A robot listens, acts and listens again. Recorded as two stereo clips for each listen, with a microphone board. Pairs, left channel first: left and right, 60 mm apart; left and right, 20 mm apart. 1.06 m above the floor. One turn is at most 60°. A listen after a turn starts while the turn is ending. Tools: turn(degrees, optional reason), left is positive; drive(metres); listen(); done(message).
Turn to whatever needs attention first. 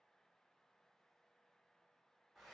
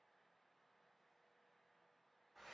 listen()
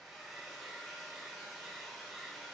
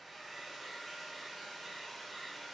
listen()
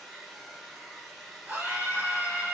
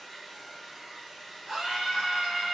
turn(degrees=-35, reason="The scream: about 35° right or 145° right.")
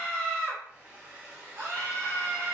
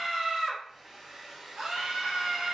turn(degrees=-60, reason="So it is at 105° right.")
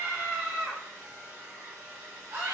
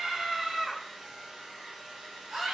turn(degrees=-60, reason="The scream is now 60° right.")
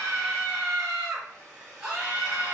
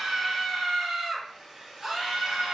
turn(degrees=-25, reason="The scream is now 25° right.")
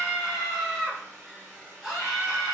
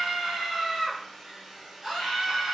turn(degrees=-10, reason="The scream is now 10° right.")
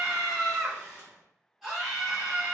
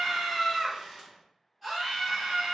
done("Found it: a scream, straight ahead, 1 to 2 m away.")